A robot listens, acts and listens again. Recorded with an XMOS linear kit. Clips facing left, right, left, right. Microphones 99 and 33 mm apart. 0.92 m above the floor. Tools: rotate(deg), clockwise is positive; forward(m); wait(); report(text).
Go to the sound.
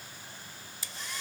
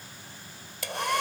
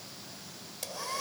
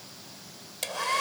rotate(70)
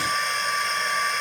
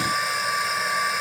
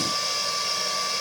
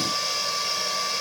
forward(1.0)
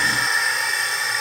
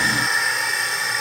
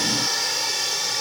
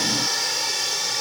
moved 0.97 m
forward(1.0)
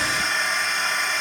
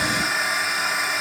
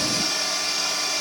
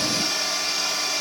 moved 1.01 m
forward(1.0)
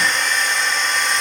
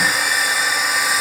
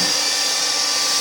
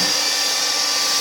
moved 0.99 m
forward(1.0)
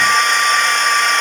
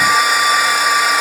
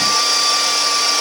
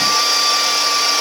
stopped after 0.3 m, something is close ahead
rotate(10)
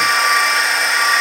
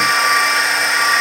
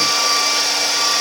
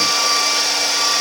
report("Arrived at the hair dryer, straight ahead.")